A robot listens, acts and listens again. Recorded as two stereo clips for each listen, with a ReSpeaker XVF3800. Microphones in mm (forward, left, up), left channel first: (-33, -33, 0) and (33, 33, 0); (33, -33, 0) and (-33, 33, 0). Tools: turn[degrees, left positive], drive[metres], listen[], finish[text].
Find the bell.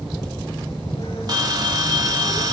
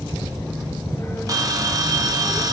Thought: The bell: 85° left.
Action: turn[85]
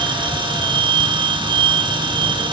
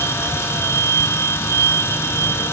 Thought: The bell is now 15° left.
Action: turn[15]
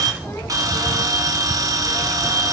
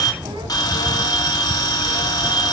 Action: finish[Facing the bell, 1 to 2 m away.]